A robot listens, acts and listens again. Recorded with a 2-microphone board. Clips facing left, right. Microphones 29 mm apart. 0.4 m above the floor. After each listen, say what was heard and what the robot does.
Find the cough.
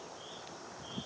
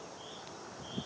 Keep listening.
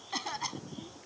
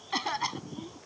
The cough: about 20° right or 160° right. Turn 20° right.
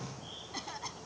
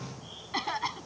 So it is at 135° right. Turn 135° right.
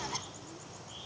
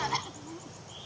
The cough is now 35° right. Turn 35° right.
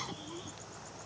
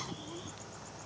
Keep listening.
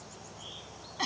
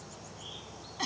The cough is now 10° left. Turn 10° left.
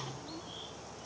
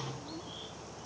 Keep listening.
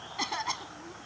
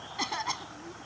Found it: a cough, straight ahead.